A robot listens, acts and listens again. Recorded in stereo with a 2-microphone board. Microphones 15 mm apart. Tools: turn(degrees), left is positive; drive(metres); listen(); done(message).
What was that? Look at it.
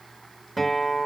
turn(degrees=30)
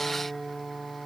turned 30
turn(degrees=-25)
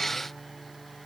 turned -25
done("Found it: a guitar, straight ahead, 2 to 4 m away.")